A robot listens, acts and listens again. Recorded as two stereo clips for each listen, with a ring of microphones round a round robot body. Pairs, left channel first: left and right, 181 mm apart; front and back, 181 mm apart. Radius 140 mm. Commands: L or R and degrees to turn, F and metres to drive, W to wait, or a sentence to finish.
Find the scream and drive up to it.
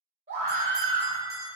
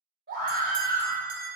R140
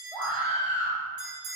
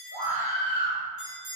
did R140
F1.0
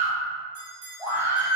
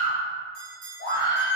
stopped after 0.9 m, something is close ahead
R15
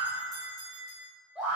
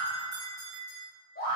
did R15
I am next to the scream.